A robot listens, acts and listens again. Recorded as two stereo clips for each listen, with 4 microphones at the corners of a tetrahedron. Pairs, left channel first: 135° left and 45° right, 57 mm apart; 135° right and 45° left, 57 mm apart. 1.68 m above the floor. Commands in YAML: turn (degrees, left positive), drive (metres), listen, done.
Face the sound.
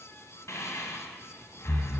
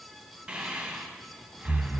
turn: 120
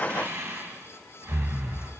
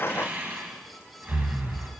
done: "Found it: breathing, straight ahead, 1 to 2 m away."